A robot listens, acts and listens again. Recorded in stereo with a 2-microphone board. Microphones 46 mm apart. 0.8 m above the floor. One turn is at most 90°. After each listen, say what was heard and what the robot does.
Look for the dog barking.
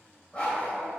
The dog barking: about 30° left or 150° left. Turn 30° left.
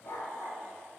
So it is at 110° left. Turn 90° left.
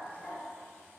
The dog barking is now 40° left. Turn 40° left.
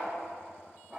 The dog barking is now 20° right. Turn 20° right.
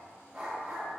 The dog barking is now 15° right. Turn 15° right.
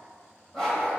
Found it: a dog barking, straight ahead.